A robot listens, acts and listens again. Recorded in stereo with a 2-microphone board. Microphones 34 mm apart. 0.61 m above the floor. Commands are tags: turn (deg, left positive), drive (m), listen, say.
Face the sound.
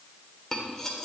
<turn deg="30"/>
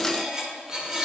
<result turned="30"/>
<turn deg="-20"/>
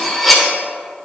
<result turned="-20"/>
<say>Facing the cutlery clinking, under 1 m away.</say>